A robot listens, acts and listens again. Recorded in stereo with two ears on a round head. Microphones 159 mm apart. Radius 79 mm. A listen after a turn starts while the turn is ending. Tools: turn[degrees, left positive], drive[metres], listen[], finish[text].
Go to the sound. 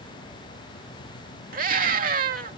Thought: The scream: about 50° right or 130° right.
Action: turn[-50]
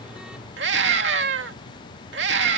Thought: So it is at 75° right.
Action: turn[-75]
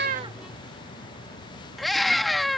Action: drive[1.0]
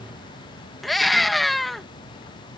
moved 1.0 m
Action: drive[1.0]
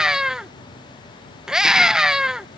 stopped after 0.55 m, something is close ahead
Action: finish[I am next to the scream.]